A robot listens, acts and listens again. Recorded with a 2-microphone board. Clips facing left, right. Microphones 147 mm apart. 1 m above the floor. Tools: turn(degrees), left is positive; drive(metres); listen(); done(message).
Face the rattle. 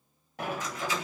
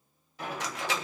turn(degrees=-90)
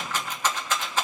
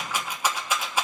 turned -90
turn(degrees=-10)
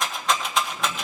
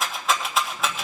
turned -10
done("Facing the rattle, 1 to 2 m away.")